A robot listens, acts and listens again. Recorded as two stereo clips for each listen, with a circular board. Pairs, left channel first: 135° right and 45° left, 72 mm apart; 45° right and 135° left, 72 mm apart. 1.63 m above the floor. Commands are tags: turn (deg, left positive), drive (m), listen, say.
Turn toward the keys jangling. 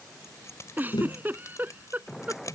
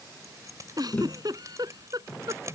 <turn deg="-175"/>
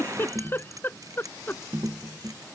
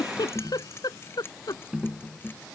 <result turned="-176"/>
<turn deg="10"/>
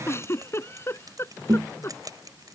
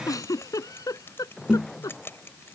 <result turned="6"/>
<turn deg="15"/>
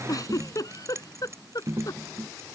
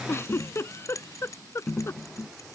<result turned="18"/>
<say>Facing the keys jangling.</say>